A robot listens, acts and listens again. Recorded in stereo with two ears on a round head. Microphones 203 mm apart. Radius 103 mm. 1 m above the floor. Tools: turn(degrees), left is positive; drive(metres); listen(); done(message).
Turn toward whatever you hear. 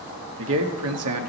turn(degrees=-70)
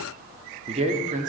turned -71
turn(degrees=-30)
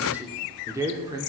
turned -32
turn(degrees=-15)
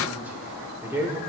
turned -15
turn(degrees=-10)
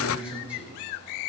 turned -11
done("Facing the man speaking.")